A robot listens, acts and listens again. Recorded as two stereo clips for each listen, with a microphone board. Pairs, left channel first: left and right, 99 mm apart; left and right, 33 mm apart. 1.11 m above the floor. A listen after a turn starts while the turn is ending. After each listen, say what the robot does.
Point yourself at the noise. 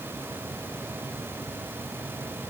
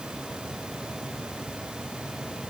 Keep listening.
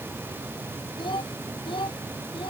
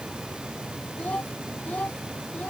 Turn 55° left.
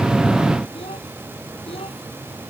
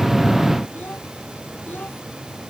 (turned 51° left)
Keep listening.
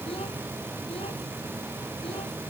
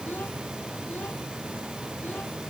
Keep listening.
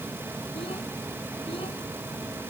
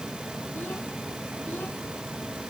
I heard a child speaking, but can't make it out now. It was about 5° left or 75° left.